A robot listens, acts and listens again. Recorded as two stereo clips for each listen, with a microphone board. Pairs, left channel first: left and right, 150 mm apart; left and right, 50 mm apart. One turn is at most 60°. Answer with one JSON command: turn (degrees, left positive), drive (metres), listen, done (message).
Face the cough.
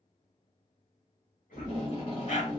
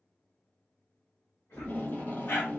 {"turn": 60}
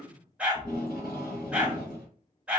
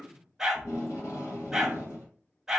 {"turn": 35}
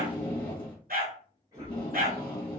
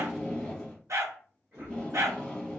{"turn": -25}
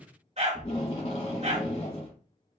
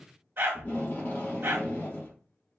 {"listen": true}
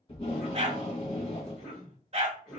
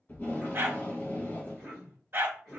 {"done": "Facing the cough."}